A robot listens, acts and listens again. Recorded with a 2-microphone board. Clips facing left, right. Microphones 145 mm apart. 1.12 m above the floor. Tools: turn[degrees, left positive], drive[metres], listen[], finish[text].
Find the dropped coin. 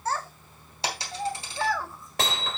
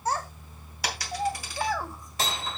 Thought: The dropped coin: about 25° left or 155° left.
Action: turn[25]
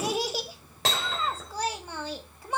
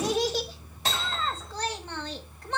Action: listen[]
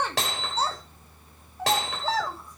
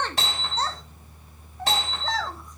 Action: finish[I heard a dropped coin, but can't make it out now. It was about straight ahead or 130° left.]